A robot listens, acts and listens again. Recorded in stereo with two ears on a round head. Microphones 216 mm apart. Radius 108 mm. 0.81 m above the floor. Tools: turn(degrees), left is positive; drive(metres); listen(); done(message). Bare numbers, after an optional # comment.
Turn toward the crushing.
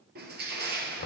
# The crushing: about 45° right or 135° right.
turn(-45)
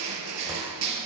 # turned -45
# So it is at 90° right.
turn(-90)
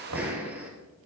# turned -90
done("Facing the crushing.")